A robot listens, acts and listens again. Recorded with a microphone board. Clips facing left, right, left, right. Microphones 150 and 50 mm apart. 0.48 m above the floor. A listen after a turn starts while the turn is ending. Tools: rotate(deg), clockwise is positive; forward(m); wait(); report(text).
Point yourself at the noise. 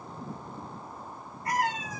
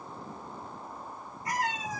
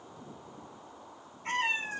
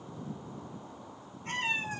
rotate(-55)
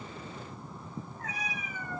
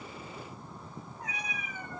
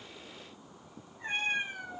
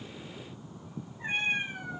rotate(25)
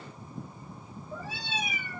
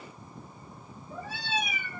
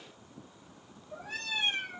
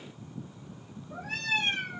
rotate(65)
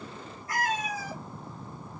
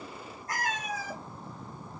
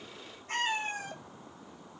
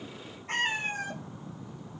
rotate(55)
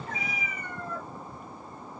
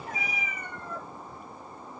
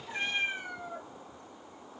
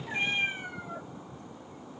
rotate(20)
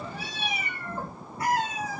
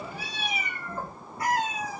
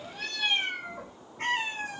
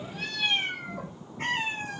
report("Found it: a cat meowing, straight ahead.")